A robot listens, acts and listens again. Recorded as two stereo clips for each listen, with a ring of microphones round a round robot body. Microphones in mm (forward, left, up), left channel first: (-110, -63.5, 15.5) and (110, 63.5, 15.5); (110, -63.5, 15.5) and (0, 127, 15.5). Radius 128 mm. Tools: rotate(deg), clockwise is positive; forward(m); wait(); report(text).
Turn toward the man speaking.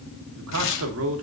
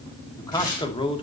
report("Found it: a man speaking, straight ahead.")